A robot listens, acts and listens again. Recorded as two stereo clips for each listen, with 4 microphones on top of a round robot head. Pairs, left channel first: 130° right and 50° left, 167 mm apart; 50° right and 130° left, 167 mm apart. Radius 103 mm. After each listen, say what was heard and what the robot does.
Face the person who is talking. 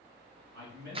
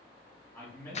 The man speaking: 30° left. Turn 30° left.
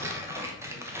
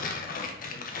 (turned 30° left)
Keep listening.
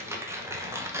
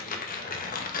Keep listening.
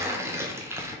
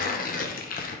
I heard a man speaking from this way, but can't make it out now.